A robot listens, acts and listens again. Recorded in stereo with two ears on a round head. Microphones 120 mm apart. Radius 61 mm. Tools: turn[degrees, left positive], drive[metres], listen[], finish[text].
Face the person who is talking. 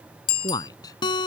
Thought: The man speaking: about 25° left or 155° left.
Action: turn[25]
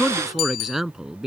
Action: finish[Facing the man speaking.]